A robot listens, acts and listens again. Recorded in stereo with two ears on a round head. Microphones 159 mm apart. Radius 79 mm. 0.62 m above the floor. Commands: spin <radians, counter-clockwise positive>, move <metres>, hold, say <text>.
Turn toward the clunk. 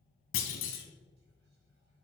spin 1.57
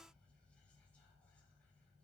say Facing where the clunk came from. I can't hear it now.